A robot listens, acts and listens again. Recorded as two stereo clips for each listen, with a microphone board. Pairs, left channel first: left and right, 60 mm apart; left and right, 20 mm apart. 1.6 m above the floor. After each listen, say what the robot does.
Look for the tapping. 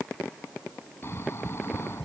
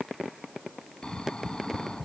Turn 30° left.
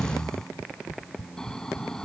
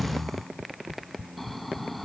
Turn 140° left.
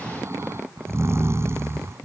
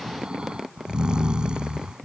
Found it: tapping, straight ahead.